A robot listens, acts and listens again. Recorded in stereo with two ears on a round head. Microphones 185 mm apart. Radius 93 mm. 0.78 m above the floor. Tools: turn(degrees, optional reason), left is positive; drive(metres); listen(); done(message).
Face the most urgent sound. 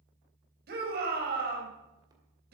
turn(degrees=-55, reason="The shout: about 55° right or 125° right.")
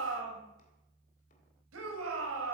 turn(degrees=-70, reason="So it is at 70° right.")
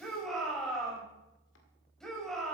done("Found it: a shout, straight ahead.")